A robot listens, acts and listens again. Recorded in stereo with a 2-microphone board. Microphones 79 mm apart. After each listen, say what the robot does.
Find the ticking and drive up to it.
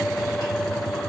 Keep listening.
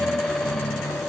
Keep listening.
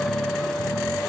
I can't make out ticking to turn to.